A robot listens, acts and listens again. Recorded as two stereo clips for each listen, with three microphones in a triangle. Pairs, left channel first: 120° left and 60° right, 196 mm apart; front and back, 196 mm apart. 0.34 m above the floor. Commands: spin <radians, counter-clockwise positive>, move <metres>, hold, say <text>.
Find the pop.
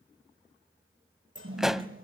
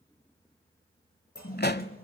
spin 0.52
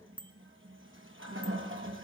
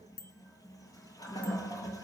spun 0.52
say Facing where the pop came from. I can't hear it now.